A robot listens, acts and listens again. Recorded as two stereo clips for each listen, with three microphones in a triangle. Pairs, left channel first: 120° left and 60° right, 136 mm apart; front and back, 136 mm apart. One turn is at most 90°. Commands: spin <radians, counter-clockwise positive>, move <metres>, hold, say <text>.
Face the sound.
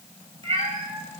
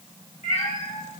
spin -0.26
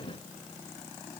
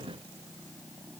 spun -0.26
hold
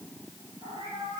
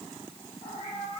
say Facing the cat meowing.